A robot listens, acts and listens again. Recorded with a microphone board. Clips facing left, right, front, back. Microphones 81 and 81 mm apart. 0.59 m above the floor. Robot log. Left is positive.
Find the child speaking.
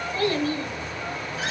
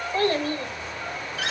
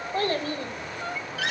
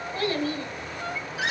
note: The child speaking: 50° right.
cmd yaw -50
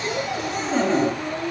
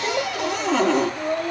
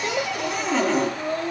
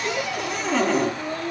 note: The child speaking is now 65° right.
cmd yaw -65
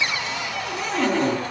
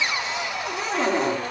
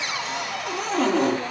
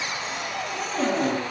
cmd idle
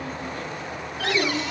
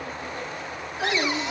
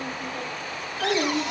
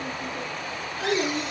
note: The child speaking is now 25° right.
cmd yaw -25
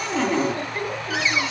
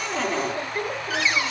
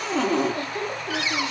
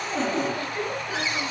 note: The child speaking is now 10° right.
cmd yaw -10
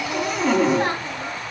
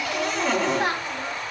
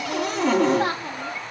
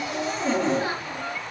end: Facing the child speaking, 2 to 4 m away.